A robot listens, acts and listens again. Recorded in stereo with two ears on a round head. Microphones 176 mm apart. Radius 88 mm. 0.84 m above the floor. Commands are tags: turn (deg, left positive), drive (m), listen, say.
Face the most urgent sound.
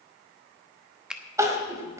<turn deg="-15"/>
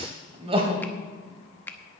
<turn deg="-150"/>
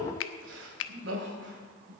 <turn deg="-65"/>
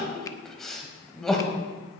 <say>Found it: crying, straight ahead.</say>